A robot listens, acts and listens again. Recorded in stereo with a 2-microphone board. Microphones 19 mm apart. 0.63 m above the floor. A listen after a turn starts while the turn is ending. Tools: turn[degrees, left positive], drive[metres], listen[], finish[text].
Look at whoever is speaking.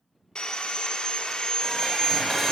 Action: listen[]
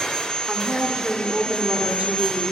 Thought: The woman speaking: about 65° right or 115° right.
Action: turn[-65]
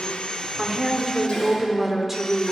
Thought: So it is at 15° right.
Action: turn[-15]
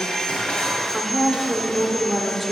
Action: finish[Found it: a woman speaking, straight ahead, 1 to 2 m away.]